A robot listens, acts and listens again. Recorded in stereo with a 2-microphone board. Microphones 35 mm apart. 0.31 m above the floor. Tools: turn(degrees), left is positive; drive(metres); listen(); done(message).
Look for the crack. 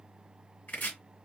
listen()
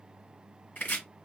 listen()
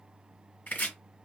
done("I can't make out a crack to turn to.")